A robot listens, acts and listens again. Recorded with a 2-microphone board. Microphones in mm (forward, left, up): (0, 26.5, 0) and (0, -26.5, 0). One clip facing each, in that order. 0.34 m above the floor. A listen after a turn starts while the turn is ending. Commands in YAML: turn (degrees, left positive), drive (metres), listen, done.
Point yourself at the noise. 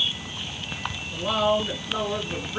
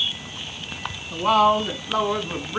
turn: -65
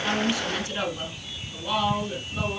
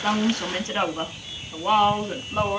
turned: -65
turn: -55
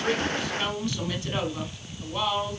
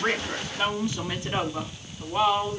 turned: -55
turn: -30
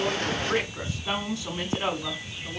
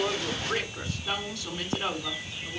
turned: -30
turn: 25
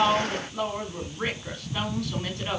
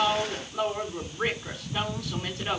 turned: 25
done: "Facing the woman speaking, 2 to 4 m away."